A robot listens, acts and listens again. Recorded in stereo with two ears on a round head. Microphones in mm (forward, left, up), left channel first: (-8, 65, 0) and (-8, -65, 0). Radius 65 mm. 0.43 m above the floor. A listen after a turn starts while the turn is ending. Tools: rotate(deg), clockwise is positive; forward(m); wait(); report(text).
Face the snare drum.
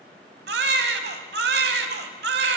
wait()
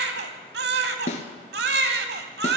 rotate(-50)
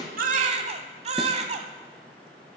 wait()
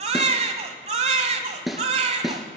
report("Facing the snare drum, 1 to 2 m away.")